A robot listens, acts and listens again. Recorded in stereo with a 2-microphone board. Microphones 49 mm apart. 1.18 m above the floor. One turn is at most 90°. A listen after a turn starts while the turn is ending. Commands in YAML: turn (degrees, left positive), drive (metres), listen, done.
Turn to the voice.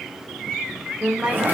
turn: -25
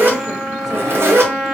listen: true
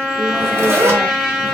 listen: true
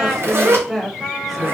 done: "Found it: a woman speaking, straight ahead, under 1 m away."